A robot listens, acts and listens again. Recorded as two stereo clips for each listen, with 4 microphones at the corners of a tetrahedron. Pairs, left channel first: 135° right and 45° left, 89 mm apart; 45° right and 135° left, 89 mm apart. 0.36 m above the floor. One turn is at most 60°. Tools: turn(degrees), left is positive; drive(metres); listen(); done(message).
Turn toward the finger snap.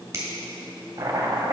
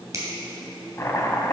turn(degrees=60)
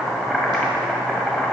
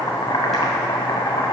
turn(degrees=35)
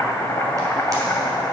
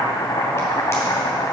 listen()
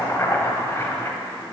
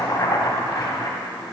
done("Facing where the finger snap came from. I can't hear it now.")